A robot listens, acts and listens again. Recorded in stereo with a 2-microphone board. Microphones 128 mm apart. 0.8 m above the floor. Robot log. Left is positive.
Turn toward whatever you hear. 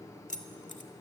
cmd yaw +90
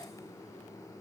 cmd idle
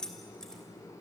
end: Found it: keys jangling, straight ahead, 2 to 4 m away.